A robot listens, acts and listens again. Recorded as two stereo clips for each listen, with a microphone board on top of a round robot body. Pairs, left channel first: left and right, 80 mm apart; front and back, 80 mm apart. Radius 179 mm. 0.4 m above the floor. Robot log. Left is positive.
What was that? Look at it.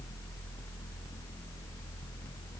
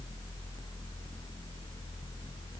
cmd idle
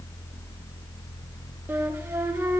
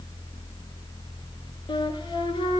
note: The flute: 20° right.
cmd yaw -20
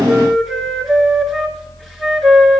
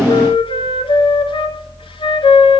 end: Found it: a flute, straight ahead, 1 to 2 m away.